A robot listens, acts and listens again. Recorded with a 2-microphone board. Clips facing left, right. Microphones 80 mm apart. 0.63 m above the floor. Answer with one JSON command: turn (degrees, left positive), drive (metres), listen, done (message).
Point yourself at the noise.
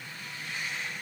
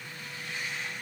{"listen": true}
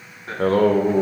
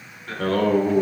{"turn": 30}
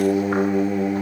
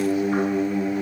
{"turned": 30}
{"turn": 120}
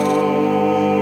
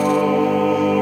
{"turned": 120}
{"done": "Facing the singing."}